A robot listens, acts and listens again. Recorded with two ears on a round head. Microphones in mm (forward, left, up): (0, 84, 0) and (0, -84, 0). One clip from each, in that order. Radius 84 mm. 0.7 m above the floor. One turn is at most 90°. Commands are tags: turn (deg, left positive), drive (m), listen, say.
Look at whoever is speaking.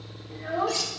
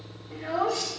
<turn deg="-30"/>
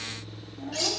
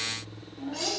<say>Found it: a child speaking, straight ahead, 1 to 2 m away.</say>